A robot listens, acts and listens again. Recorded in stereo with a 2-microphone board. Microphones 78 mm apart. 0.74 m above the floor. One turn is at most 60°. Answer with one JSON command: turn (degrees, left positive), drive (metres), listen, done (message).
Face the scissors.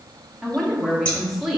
{"turn": 15}
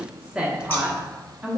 {"listen": true}
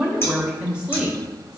{"listen": true}
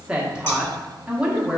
{"done": "I heard scissors, but can't make it out now. It was about straight ahead or 150° left."}